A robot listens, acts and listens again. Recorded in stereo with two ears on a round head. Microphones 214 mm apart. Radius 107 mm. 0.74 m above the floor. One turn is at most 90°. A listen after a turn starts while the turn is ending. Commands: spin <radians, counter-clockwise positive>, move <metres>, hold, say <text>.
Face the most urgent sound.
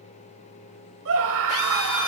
spin -1.05
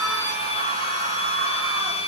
hold
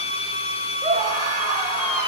spin -0.52
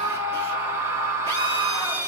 spin -0.17
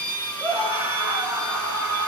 spin -0.17
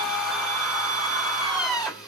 say Facing the scream, 1 to 2 m away.